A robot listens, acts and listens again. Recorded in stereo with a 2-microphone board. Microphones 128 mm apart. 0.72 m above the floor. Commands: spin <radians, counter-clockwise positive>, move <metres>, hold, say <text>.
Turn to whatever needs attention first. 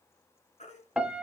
spin 1.13
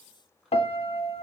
hold
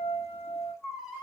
say Found it: a baby crying, straight ahead.